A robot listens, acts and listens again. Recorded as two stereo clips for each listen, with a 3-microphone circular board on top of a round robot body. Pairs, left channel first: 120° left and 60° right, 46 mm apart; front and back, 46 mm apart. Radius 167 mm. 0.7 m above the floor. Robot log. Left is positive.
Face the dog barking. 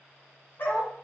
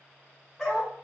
note: The dog barking: 80° left.
cmd yaw +80
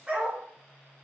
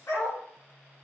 end: Found it: a dog barking, straight ahead, 2 to 4 m away.